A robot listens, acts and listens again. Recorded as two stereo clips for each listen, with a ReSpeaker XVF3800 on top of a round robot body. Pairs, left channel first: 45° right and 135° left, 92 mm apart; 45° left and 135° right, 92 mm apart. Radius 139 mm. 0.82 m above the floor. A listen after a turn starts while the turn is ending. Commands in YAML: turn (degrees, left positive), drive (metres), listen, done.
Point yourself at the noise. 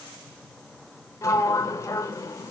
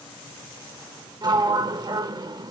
turn: -100
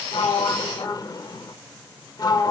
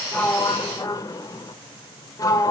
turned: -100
done: "Found it: a sliding door, straight ahead, 1 to 2 m away."